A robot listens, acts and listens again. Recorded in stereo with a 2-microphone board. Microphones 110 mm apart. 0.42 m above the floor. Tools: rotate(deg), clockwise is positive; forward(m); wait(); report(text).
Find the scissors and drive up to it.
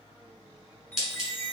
rotate(30)
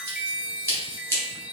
rotate(-25)
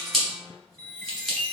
forward(1.0)
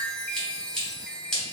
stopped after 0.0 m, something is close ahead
report("Blocked. The scissors is further on, straight ahead.")